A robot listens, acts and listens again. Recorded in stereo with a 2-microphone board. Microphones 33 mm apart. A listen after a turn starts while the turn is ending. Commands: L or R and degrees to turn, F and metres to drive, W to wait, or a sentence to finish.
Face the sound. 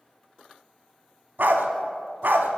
R65
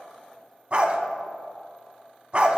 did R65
R40
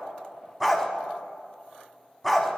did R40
Facing the dog barking.